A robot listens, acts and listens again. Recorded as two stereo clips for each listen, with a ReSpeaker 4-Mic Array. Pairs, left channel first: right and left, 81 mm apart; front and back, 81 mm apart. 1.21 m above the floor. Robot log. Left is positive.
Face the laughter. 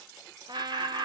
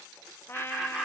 note: The laughter: 95° left.
cmd yaw +95
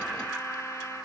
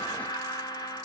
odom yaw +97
note: The laughter is now 20° left.
cmd yaw +20
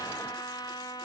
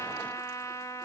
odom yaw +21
cmd idle
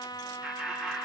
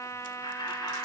note: The laughter is now 15° left.
cmd yaw +15
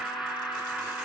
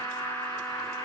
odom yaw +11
note: The laughter is now 10° left.
cmd yaw +10
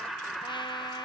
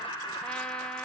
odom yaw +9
end: Facing the laughter, over 4 m away.